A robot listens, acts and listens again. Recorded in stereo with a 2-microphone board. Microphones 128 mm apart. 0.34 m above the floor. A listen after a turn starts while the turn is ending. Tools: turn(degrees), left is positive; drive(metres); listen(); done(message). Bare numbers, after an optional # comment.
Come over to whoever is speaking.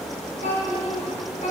# The child speaking: about 65° left or 115° left.
turn(65)
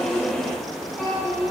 drive(1.0)
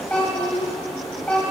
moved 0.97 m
# The child speaking is now 10° left.
turn(10)
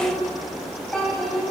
drive(1.0)
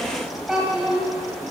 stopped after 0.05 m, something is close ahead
done("I am next to the child speaking.")